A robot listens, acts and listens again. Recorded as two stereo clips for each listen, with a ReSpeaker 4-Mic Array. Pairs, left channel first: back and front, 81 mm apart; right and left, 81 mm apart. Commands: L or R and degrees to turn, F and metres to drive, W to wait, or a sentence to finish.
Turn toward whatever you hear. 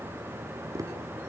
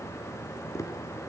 R40
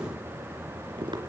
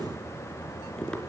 R10
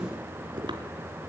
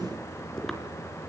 Found it: tapping, straight ahead, 2 to 4 m away.